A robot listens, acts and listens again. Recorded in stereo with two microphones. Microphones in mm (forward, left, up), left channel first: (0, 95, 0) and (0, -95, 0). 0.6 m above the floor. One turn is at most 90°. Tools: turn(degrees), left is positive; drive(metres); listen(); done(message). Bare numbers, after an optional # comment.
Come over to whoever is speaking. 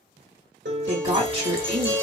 # The woman speaking: about 30° right or 150° right.
turn(-30)
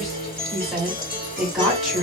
drive(1.0)
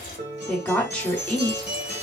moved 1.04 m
# The woman speaking is now 10° left.
turn(10)
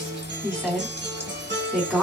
drive(1.0)
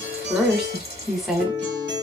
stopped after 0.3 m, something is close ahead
done("I am next to the woman speaking.")